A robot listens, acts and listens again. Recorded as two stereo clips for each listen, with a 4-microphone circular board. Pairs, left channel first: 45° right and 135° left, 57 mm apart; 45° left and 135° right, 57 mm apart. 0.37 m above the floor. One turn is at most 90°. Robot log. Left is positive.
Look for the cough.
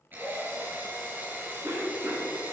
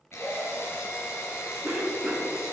note: The cough: 165° left.
cmd yaw +90
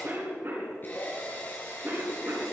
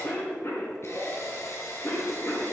note: The cough is now 90° left.
cmd yaw +90
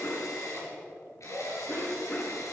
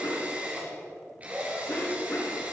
note: The cough is now 10° left.
cmd yaw +10
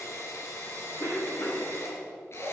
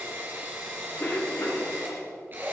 end: Facing the cough.